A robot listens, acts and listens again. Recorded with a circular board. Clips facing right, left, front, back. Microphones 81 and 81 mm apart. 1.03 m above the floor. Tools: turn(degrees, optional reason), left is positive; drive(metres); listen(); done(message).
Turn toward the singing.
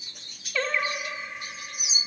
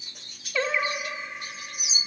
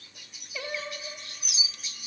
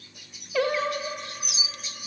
turn(degrees=175, reason="The singing: 175° left.")
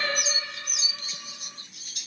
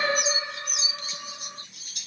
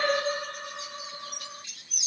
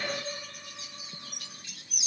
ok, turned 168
turn(degrees=25, reason="The singing is now 25° left.")
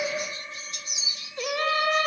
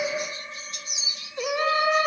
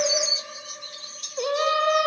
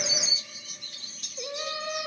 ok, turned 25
turn(degrees=10, reason="The singing is now 10° left.")
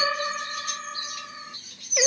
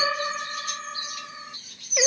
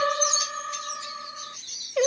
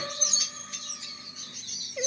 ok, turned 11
done("Found it: singing, straight ahead.")